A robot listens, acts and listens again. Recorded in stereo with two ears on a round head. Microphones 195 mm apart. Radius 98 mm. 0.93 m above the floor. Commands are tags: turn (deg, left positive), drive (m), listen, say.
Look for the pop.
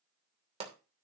<turn deg="-30"/>
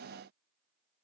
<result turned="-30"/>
<listen/>
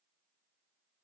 <say>I heard a pop, but can't make it out now. It was about straight ahead or 120° right.</say>